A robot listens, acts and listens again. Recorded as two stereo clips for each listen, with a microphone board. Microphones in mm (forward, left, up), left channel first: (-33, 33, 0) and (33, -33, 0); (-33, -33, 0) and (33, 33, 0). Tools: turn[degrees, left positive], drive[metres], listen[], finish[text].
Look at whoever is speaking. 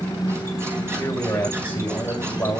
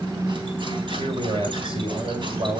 Thought: The man speaking: 65° left.
Action: turn[65]
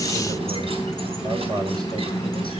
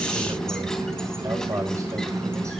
Action: finish[Found it: a man speaking, straight ahead, over 4 m away.]